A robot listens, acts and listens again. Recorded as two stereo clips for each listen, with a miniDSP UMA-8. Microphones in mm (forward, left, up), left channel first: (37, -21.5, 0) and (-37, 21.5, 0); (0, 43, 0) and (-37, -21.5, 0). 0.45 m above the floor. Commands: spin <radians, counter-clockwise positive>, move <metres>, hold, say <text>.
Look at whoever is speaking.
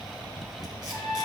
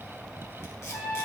hold
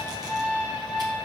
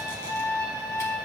hold
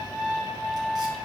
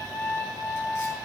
say I can't make out anyone speaking to turn to.